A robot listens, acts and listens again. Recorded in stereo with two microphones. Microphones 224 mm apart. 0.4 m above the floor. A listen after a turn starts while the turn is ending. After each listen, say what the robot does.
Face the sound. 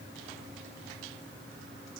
Keep listening.
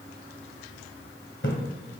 Turn 55° left.
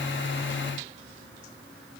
Keep listening.
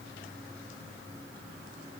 I heard a splash, but can't make it out now. It was about straight ahead or 70° left.